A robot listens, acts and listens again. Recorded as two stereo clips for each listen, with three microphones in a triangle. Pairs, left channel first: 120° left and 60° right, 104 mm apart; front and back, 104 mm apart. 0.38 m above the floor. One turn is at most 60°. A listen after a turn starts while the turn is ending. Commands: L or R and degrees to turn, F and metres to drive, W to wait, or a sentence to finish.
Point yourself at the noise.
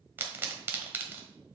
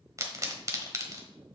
R60
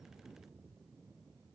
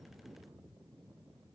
R60
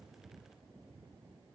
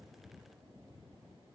I heard a pop from this way, but can't make it out now.